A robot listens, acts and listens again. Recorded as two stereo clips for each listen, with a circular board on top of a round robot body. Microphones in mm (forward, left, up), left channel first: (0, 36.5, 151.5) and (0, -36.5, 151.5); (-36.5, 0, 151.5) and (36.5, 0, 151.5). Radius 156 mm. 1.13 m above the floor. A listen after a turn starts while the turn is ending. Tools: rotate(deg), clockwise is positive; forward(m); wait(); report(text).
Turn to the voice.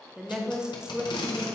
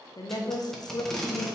rotate(170)
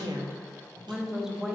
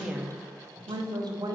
report("Facing the woman speaking.")